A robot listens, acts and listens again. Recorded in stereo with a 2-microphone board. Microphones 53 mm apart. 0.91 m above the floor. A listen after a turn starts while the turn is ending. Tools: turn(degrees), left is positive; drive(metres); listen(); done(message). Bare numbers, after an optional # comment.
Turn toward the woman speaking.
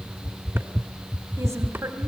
turn(-90)
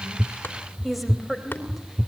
done("Found it: a woman speaking, straight ahead.")